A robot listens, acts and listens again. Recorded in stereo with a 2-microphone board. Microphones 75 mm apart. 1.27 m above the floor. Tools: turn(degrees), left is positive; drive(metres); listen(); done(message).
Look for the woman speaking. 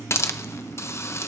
listen()
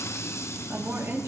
turn(degrees=-40)
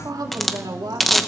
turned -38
turn(degrees=-95)
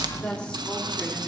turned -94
turn(degrees=15)
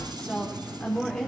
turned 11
turn(degrees=10)
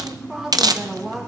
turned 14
done("Facing the woman speaking.")